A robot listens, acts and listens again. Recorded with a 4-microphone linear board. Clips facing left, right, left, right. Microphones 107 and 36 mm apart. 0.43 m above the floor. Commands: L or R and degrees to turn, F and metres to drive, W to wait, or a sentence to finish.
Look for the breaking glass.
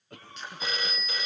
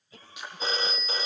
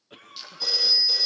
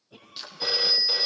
R30
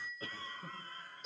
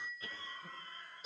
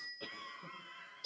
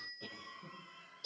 W
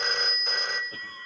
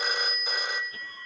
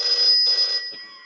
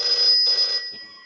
I heard breaking glass, but can't make it out now. It was about 20° left or 140° right.